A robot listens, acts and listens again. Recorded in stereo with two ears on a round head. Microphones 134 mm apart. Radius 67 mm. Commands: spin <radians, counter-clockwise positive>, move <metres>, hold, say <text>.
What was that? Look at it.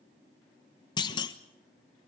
spin 0.52
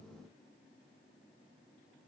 hold
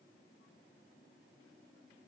say I heard a clunk, but can't make it out now. It was about straight ahead or 120° left.